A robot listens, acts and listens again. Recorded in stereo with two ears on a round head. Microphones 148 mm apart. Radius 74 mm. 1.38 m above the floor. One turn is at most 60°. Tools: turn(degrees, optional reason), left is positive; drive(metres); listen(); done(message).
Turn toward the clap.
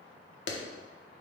turn(degrees=60)
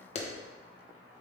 turn(degrees=40, reason="So it is at 40° left.")
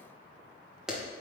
done("Facing the clap.")